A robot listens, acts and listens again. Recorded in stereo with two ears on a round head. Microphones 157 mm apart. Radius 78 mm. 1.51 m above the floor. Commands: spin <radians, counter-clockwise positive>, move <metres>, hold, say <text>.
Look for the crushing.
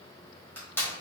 spin 0.52
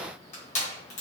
spin 2.44
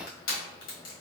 spin 0.96
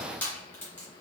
spin 0.17
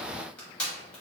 say Facing the crushing.